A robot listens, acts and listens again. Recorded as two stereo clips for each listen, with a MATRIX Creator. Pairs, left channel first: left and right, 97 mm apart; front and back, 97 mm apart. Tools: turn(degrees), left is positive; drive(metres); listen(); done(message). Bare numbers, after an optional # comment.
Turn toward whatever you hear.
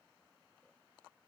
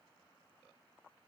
listen()
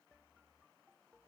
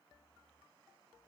listen()
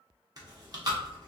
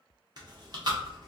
# The chewing: 140° right.
turn(-140)
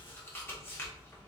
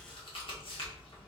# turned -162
# The chewing is now 25° left.
turn(25)
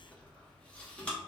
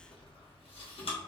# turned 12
# The chewing is now 10° left.
turn(10)
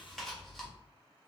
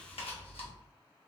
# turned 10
done("Found it: chewing, straight ahead, 1 to 2 m away.")